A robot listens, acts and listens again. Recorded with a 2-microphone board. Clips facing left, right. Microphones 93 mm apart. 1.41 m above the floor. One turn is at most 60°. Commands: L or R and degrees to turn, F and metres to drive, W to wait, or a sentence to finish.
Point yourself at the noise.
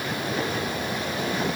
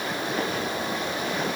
W
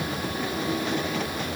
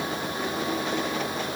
W
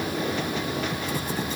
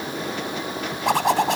R60
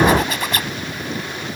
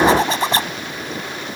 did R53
R30
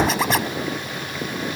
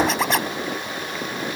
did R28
Found it: a zipper, straight ahead.